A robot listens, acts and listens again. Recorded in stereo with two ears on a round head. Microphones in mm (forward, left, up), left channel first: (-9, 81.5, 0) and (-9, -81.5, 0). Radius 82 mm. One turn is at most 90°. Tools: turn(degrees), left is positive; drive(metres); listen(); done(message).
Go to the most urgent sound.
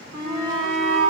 turn(degrees=-65)
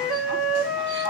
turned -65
listen()
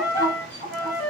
turn(degrees=-50)
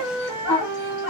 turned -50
drive(metres=1.0)
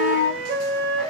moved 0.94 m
drive(metres=1.0)
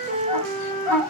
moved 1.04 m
drive(metres=1.0)
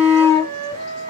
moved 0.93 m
turn(degrees=15)
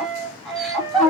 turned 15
drive(metres=1.0)
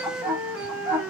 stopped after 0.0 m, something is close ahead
done("I am next to the shout.")